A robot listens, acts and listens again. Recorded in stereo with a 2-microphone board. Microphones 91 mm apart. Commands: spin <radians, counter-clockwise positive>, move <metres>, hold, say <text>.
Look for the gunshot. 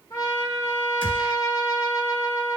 spin 1.13
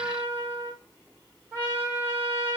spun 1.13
hold
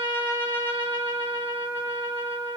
say I heard a gunshot, but can't make it out now. It was about straight ahead or 50° left.